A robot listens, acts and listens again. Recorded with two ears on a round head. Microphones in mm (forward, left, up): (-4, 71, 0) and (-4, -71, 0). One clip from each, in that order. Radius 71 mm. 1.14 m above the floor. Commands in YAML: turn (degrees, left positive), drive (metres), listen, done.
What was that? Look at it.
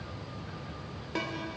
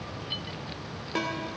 turn: -30
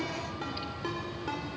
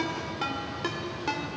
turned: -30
turn: -140
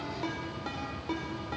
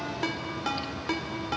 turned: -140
turn: -50
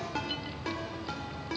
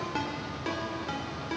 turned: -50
done: "Facing the ringtone."